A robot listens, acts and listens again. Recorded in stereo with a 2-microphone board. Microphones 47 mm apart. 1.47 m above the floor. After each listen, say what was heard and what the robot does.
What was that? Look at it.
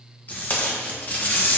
The tape being pulled: about 35° left or 145° left. Turn 35° left.
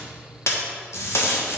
So it is at 110° left. Turn 110° left.
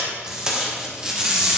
The tape being pulled is now 15° right. Turn 15° right.
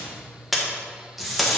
Facing the tape being pulled.